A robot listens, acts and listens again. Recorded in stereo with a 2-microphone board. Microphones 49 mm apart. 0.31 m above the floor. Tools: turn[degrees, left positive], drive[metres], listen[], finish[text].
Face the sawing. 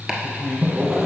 Action: turn[-30]
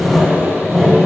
Thought: So it is at 15° left.
Action: turn[15]
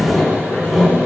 Action: finish[Facing the sawing, 1 to 2 m away.]